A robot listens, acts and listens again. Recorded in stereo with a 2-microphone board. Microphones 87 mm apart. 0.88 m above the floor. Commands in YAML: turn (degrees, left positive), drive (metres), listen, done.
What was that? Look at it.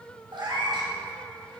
turn: -70
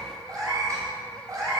turn: -45
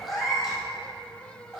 done: "Found it: a cat meowing, straight ahead."